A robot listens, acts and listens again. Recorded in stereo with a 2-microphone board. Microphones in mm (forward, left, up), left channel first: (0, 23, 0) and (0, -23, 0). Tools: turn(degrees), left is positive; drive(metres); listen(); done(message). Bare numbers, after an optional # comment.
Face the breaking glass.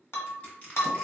turn(90)
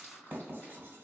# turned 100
# Nothing new. It was at 10° right.
turn(-10)
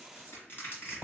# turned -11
done("Facing where the breaking glass came from. I can't hear it now.")